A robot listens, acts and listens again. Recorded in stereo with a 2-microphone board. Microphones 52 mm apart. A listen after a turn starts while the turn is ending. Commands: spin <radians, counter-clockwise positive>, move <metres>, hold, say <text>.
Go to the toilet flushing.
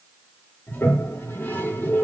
spin 0.79
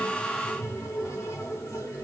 spin 1.48
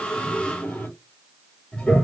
spin 0.44
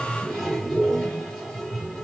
move 1.0
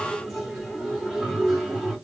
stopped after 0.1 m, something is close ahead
say Blocked. The toilet flushing is further on, straight ahead.